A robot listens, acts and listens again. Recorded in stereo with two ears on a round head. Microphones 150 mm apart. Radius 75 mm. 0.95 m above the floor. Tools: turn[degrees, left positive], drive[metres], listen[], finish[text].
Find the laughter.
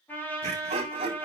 Thought: The laughter: about 35° right or 145° right.
Action: turn[-35]
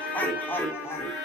Thought: So it is at 15° left.
Action: turn[15]
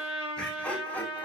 Thought: The laughter is now 10° left.
Action: turn[10]
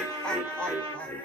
Thought: The laughter is now 10° left.
Action: turn[10]
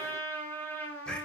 Action: finish[Facing the laughter, over 4 m away.]